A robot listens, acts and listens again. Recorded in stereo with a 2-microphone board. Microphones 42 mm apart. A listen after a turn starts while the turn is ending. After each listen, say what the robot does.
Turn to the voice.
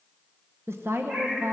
Turn 90° right.
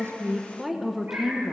Turn 10° right.
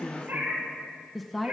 Found it: a woman speaking, straight ahead, under 1 m away.